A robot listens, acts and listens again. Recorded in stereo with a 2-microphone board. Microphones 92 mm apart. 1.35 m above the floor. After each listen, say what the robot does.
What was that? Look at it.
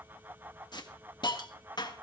Turn 50° left.
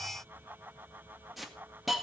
Facing the hiss, 1 to 2 m away.